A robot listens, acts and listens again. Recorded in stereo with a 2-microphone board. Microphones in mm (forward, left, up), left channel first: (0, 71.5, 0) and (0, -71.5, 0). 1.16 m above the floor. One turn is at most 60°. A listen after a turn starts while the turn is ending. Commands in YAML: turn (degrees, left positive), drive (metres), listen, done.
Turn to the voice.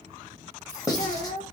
turn: 60
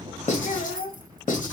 turn: 55
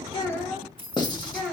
done: "Facing the child speaking."